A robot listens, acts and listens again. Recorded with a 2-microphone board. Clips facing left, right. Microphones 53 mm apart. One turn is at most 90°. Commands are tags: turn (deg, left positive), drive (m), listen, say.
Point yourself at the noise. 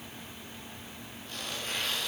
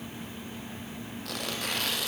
<turn deg="-90"/>
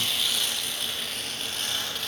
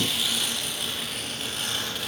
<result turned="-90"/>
<say>Found it: tearing paper, straight ahead.</say>